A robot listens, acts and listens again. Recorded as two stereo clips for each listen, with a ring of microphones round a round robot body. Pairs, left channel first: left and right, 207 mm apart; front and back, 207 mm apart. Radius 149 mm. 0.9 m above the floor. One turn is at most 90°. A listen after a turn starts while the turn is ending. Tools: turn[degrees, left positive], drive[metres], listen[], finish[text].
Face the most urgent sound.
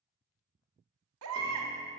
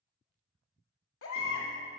Thought: The baby crying: 50° right.
Action: turn[-50]
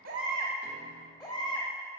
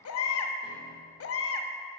Thought: The baby crying is now 10° left.
Action: turn[10]
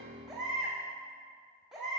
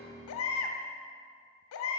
Action: finish[Found it: a baby crying, straight ahead, under 1 m away.]